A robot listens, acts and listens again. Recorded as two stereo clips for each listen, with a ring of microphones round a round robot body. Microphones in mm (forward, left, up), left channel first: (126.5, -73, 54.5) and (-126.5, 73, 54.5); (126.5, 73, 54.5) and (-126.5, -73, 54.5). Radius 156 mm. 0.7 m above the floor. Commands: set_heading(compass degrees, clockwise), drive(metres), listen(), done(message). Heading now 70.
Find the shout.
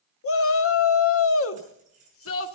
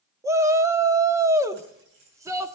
set_heading(140)
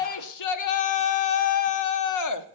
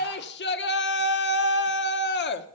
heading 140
set_heading(160)
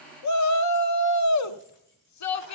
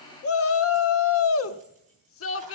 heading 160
set_heading(170)
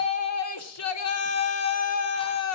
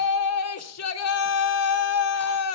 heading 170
done("Facing the shout.")